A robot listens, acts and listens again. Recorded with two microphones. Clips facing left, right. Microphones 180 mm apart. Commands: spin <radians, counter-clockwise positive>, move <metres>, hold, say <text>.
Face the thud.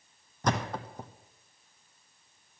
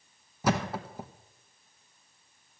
spin -0.52
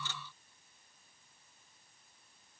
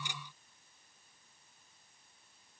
hold
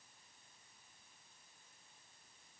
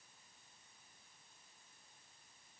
say I heard a thud, but can't make it out now. It was about 25° left or 145° right.